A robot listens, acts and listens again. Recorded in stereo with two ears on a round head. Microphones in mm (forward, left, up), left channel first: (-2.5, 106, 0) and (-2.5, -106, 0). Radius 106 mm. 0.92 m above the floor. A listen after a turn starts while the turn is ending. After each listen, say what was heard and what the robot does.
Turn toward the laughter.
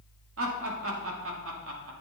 The laughter: about 60° right or 120° right. Turn 60° right.
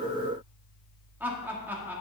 So it is at 10° right. Turn 10° right.
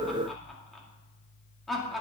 Facing the laughter, 2 to 4 m away.